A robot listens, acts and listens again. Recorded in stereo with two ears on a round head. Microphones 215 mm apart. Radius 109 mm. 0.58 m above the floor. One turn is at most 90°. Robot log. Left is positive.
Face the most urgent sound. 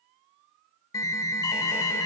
cmd yaw +30
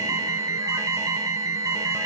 note: So it is at 15° right.
cmd yaw -15
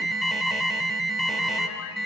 end: Found it: an alarm, straight ahead, 1 to 2 m away.